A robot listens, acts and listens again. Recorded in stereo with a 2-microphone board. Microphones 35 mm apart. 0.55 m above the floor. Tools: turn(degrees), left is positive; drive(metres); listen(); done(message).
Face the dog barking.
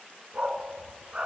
turn(degrees=-35)
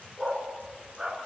turn(degrees=-15)
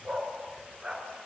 turn(degrees=-15)
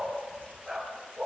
done("Found it: a dog barking, straight ahead, over 4 m away.")